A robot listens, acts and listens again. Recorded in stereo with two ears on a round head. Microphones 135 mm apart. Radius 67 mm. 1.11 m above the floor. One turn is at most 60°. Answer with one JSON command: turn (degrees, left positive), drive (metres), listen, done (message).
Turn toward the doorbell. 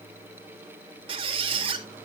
{"listen": true}
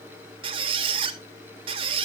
{"listen": true}
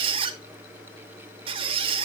{"done": "I can't make out a doorbell to turn to."}